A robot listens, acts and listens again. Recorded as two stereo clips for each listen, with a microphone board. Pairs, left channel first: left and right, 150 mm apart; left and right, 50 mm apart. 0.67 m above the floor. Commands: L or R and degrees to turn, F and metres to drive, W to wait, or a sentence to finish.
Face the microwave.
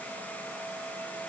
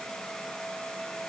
W
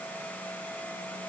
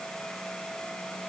W
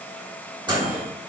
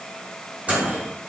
R30
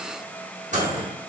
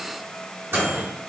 R115
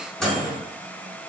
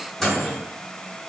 Facing the microwave.